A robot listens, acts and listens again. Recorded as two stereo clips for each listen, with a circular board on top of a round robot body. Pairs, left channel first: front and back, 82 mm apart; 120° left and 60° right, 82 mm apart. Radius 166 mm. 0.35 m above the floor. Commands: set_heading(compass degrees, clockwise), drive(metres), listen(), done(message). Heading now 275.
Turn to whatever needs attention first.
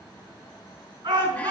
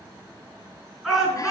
set_heading(60)
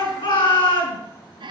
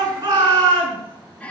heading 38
set_heading(58)
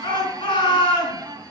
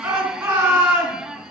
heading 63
done("Found it: a shout, straight ahead, over 4 m away.")